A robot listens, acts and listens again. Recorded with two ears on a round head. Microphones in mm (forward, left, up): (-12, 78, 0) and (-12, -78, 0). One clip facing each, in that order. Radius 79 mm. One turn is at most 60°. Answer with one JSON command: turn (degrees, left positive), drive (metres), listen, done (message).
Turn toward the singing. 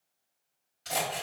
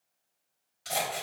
{"listen": true}
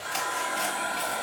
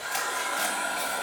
{"listen": true}
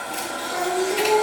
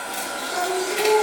{"turn": -20}
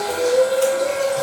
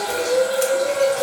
{"done": "Facing the singing, 2 to 4 m away."}